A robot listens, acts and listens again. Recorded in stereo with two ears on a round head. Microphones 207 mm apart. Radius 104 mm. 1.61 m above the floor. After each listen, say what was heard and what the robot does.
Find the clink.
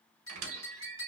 The clink: about 20° left or 160° left. Turn 20° left.
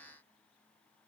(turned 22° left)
Keep listening.
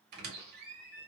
Keep listening.
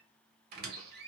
I heard a clink, but can't make it out now. It was about 5° right or 140° left.